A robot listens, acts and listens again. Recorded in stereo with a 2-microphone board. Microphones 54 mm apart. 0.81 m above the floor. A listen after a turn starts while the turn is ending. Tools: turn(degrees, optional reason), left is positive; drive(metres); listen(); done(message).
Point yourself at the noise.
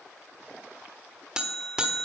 turn(degrees=-30)
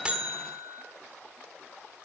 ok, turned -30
turn(degrees=-135, reason="So it is at 135° right.")
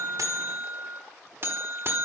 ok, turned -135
turn(degrees=-45, reason="The buzzer is now 45° right.")
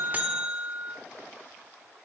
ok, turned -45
turn(degrees=-20, reason="The buzzer is now 20° right.")
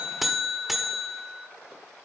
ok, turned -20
done("Facing the buzzer, 1 to 2 m away.")